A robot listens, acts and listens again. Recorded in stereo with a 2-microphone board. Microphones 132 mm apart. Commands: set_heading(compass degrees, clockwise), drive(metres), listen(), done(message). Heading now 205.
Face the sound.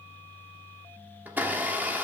set_heading(235)
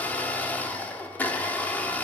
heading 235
set_heading(220)
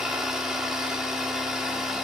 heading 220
done("Facing the blender, 1 to 2 m away.")